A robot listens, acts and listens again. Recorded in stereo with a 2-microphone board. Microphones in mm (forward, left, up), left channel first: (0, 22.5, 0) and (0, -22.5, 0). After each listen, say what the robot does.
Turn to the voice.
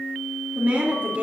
Turn 40° right.
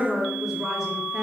Turn 10° right.
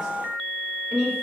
Turn 10° right.
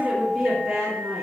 Turn 10° right.
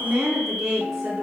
Facing the woman speaking.